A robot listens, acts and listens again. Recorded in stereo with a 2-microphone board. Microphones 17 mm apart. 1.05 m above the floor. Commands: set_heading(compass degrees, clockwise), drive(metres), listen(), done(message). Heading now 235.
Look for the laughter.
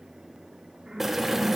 set_heading(310)
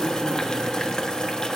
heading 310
listen()
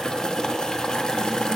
listen()
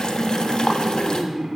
set_heading(5)
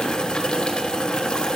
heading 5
listen()
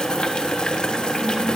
listen()
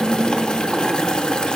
set_heading(35)
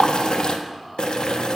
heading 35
listen()
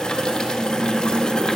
done("Facing the laughter.")